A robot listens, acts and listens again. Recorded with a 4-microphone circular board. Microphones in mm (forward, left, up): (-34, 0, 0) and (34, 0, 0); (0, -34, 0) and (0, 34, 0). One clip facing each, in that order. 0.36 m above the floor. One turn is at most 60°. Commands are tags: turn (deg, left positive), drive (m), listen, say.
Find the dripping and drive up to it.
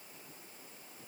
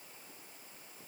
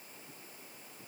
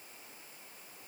<listen/>
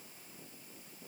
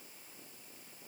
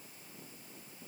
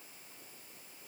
<listen/>
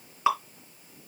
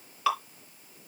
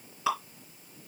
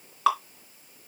<turn deg="60"/>
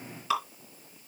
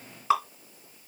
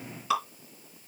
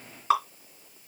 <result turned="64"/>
<turn deg="50"/>
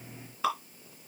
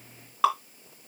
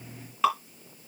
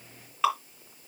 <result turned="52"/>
<drive m="1.0"/>
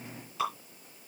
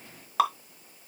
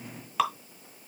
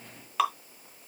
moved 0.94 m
<drive m="1.0"/>
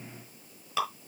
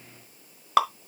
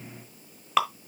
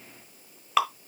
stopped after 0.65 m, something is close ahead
<say>I am next to the dripping.</say>